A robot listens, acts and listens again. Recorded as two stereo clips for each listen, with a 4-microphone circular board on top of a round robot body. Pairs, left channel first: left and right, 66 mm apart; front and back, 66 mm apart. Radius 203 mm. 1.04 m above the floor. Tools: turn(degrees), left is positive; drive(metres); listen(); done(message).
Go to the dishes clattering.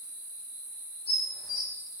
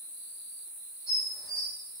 turn(degrees=-10)
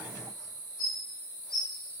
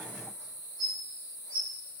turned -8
drive(metres=1.0)
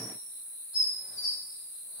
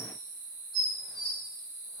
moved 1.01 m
drive(metres=1.0)
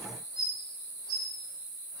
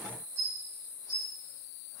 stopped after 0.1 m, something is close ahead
done("I am next to the dishes clattering.")